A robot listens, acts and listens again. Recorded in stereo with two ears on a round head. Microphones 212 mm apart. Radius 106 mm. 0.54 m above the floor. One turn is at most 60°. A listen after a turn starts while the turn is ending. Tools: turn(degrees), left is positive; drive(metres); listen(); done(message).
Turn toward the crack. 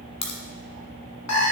turn(degrees=30)
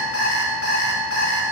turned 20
listen()
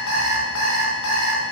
done("I heard a crack, but can't make it out now. It was about 10° left or 130° left.")